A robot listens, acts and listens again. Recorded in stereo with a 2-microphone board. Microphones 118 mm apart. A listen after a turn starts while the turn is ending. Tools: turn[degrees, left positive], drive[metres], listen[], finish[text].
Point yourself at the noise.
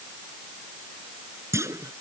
Thought: The clunk: about 25° right or 155° right.
Action: turn[-25]
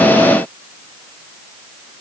Action: listen[]
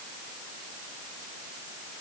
Action: finish[I heard a clunk, but can't make it out now. It was about straight ahead or 130° right.]